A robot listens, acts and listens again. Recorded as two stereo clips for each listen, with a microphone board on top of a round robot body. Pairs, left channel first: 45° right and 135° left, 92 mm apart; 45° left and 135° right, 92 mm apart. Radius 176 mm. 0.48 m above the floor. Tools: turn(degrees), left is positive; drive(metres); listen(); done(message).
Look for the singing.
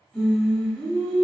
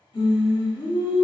turn(degrees=25)
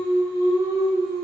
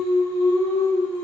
turn(degrees=-15)
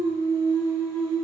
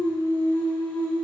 turn(degrees=-25)
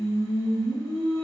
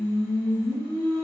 turn(degrees=-35)
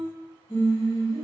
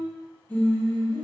turn(degrees=-25)
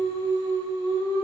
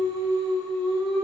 turn(degrees=-35)
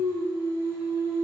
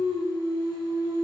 turn(degrees=10)
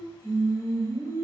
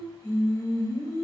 done("Found it: singing, straight ahead, 1 to 2 m away.")